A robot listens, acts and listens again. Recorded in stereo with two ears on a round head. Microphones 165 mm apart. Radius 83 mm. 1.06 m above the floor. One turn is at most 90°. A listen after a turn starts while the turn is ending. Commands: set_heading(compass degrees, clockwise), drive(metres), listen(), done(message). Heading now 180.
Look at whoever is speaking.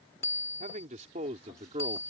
set_heading(215)
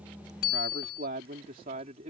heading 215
set_heading(260)
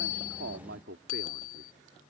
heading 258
set_heading(348)
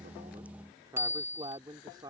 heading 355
set_heading(15)
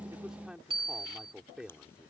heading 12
done("Found it: a man speaking, straight ahead.")